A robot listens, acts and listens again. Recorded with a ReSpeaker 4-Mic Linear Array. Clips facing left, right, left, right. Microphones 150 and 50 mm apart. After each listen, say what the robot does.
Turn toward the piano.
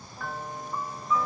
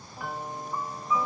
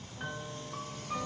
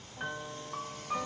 Turn 30° right.
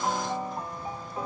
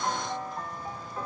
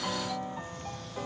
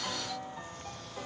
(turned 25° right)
Turn 15° left.
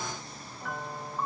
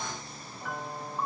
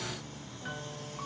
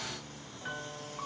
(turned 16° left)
Found it: a piano, straight ahead, 1 to 2 m away.